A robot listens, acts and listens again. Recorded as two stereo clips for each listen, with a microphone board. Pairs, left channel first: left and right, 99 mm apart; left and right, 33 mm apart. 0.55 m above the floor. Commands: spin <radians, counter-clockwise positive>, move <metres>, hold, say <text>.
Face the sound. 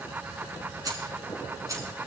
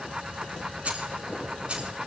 spin -0.61
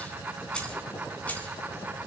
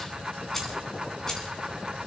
spin 0.26
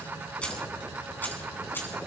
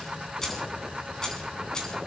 spin 0.44
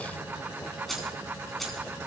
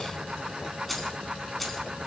say Facing the keys jangling, 2 to 4 m away.